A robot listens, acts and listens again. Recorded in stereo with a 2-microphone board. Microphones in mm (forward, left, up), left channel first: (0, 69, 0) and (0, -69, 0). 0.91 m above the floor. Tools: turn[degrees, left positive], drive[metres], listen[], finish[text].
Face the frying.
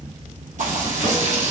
Thought: The frying: about 60° right or 120° right.
Action: turn[-60]
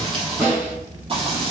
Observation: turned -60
Thought: So it is at 50° right.
Action: turn[-50]
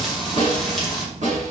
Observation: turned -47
Action: finish[Found it: frying, straight ahead.]